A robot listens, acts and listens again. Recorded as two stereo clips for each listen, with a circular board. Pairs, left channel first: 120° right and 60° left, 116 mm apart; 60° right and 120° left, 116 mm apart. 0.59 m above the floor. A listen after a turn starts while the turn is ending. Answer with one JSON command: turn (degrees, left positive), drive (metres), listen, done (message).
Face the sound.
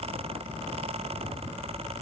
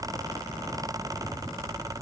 {"listen": true}
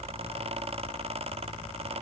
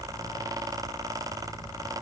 {"listen": true}
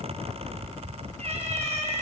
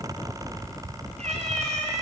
{"turn": 95}
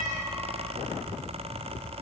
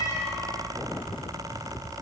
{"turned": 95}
{"listen": true}
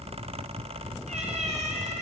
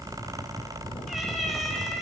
{"turn": 30}
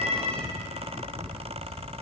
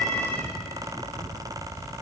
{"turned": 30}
{"listen": true}
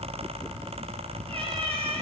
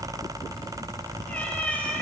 {"turn": 20}
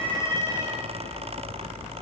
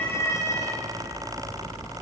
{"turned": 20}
{"done": "Facing the cat meowing, over 4 m away."}